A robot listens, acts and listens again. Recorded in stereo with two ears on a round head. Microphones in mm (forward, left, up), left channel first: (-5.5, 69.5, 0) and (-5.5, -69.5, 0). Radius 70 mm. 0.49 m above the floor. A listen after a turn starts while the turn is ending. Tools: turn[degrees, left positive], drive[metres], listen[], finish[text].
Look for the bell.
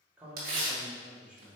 Action: listen[]
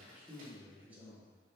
Action: listen[]
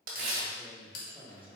Thought: The bell: about 60° left or 120° left.
Action: turn[60]
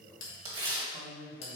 Thought: So it is at 45° left.
Action: turn[45]
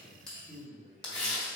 Action: listen[]
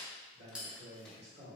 Thought: The bell is now 10° right.
Action: turn[-10]
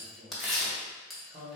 Action: finish[Facing the bell, 1 to 2 m away.]